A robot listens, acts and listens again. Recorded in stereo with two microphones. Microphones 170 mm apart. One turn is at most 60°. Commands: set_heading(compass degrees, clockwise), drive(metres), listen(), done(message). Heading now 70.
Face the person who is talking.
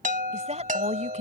set_heading(115)
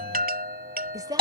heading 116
set_heading(141)
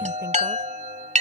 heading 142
listen()
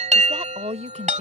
set_heading(187)
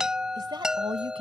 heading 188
set_heading(223)
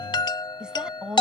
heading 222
done("Found it: a woman speaking, straight ahead.")